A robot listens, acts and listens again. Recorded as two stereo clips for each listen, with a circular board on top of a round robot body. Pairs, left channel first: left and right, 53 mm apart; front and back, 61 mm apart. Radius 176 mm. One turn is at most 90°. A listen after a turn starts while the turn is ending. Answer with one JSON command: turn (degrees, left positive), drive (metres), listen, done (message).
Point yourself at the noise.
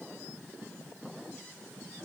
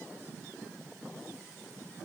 {"listen": true}
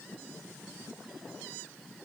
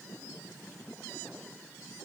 {"listen": true}
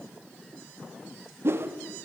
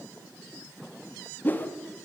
{"turn": -55}
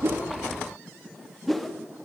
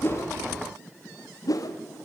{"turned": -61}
{"done": "Found it: a whoosh, straight ahead."}